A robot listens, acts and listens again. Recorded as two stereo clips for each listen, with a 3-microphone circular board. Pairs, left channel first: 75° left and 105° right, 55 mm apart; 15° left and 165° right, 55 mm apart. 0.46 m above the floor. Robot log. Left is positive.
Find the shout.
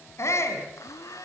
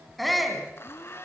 note: The shout: 105° left.
cmd yaw +105
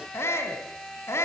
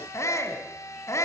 note: The shout is now 40° left.
cmd yaw +40
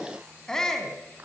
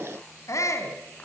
end: Facing the shout.